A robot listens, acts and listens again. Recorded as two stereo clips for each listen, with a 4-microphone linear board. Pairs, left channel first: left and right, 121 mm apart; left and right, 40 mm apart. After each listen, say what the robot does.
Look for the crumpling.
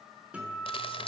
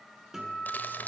Turn 50° left.
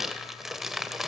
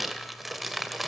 Found it: crumpling, straight ahead.